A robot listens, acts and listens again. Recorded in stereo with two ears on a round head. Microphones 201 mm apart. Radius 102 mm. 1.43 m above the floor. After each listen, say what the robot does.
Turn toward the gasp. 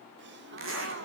Turn 50° right.
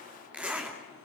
Keep listening.
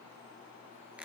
I heard a gasp, but can't make it out now. It was about straight ahead or 80° right.